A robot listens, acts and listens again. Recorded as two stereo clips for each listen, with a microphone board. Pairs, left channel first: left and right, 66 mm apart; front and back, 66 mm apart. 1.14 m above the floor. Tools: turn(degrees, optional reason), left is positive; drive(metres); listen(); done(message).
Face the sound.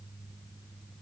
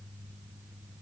listen()
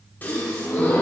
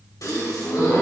turn(degrees=30, reason="The gasp: 30° left.")
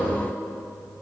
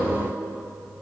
done("I heard a gasp from this way, but can't make it out now.")